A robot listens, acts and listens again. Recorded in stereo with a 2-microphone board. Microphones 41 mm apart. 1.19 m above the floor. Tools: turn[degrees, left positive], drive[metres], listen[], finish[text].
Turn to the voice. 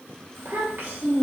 Thought: The child speaking: about 55° right or 125° right.
Action: turn[-55]
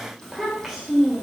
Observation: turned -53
Action: finish[Facing the child speaking, 1 to 2 m away.]